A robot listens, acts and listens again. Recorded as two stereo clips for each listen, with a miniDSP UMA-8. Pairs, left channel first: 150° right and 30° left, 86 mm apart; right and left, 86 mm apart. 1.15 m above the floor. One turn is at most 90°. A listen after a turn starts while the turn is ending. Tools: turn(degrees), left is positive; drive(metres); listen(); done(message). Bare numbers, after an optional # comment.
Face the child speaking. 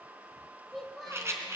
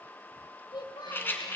# The child speaking: 60° right.
turn(-60)
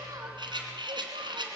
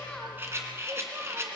listen()
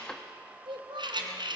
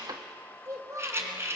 # The child speaking is now 40° left.
turn(40)
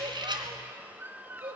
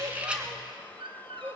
# The child speaking is now 25° left.
turn(25)
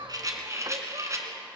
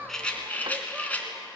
listen()
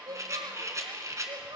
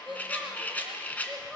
# The child speaking is now 10° left.
turn(10)
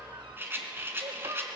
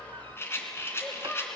listen()
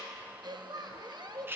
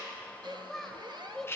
done("Facing the child speaking.")